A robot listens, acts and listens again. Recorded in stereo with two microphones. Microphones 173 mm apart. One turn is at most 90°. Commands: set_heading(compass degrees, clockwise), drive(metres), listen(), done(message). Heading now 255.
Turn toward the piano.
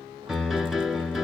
set_heading(225)
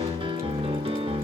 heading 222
set_heading(257)
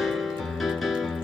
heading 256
done("Found it: a piano, straight ahead.")